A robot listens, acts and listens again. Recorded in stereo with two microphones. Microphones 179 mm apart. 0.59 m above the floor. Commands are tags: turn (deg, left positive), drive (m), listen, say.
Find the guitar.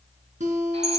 <turn deg="-40"/>
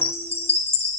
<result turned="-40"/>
<listen/>
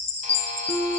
<say>Facing the guitar, 2 to 4 m away.</say>